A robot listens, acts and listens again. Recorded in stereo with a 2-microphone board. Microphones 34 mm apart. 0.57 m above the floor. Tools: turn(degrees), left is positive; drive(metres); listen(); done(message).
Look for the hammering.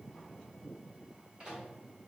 listen()
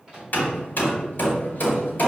turn(degrees=60)
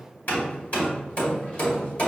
turn(degrees=55)
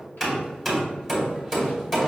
done("Found it: hammering, straight ahead.")